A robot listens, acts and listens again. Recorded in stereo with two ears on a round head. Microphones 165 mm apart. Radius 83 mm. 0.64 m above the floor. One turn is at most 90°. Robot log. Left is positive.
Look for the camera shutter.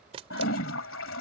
note: The camera shutter: about 30° right or 150° right.
cmd yaw -30
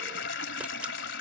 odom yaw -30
cmd idle
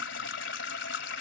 cmd idle
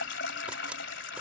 end: I heard a camera shutter, but can't make it out now. It was about straight ahead or 120° right.